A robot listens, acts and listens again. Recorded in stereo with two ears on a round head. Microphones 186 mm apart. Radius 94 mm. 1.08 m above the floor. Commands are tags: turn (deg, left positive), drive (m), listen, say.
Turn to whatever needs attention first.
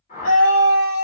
<turn deg="90"/>
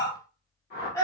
<turn deg="15"/>
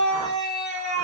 <say>Facing the scream.</say>